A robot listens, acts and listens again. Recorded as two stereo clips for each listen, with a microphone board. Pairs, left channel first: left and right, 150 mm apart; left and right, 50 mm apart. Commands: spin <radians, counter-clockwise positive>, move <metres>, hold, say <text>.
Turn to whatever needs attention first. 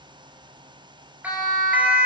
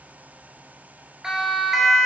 spin -0.52
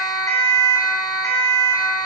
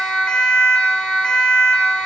spin 0.35
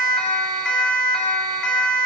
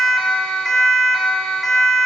say Facing the siren.